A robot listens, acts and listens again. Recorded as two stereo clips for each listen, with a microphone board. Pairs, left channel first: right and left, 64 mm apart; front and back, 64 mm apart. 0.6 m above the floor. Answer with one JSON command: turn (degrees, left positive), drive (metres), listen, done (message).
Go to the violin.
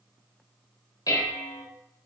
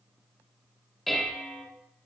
{"listen": true}
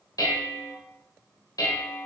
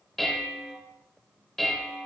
{"listen": true}
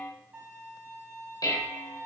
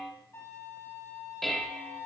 {"turn": 30}
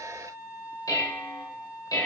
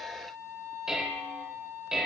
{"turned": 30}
{"turn": 15}
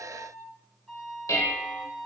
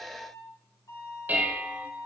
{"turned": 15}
{"drive": 1.0}
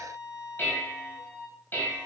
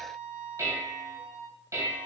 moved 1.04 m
{"drive": 1.0}
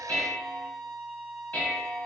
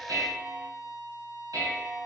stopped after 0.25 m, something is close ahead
{"turn": -10}
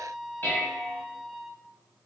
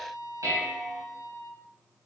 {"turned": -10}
{"done": "I am next to the violin."}